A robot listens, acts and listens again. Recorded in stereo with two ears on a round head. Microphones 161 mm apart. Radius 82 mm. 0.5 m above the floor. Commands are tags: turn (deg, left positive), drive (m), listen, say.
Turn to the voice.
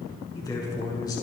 <turn deg="20"/>
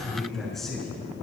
<say>Found it: a man speaking, straight ahead, over 4 m away.</say>